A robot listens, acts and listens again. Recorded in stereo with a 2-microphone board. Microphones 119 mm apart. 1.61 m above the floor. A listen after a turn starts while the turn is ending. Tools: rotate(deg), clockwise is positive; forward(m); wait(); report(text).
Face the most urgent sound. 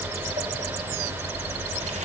wait()
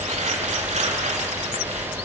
wait()
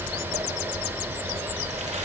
report("I can't make out anything urgent to turn to.")